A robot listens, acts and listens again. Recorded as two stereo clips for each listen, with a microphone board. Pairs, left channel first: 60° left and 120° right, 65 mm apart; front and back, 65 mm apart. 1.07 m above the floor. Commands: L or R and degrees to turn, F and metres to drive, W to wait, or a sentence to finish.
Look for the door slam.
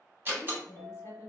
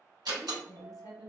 L180
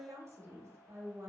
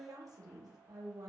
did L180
I heard a door slam from this way, but can't make it out now.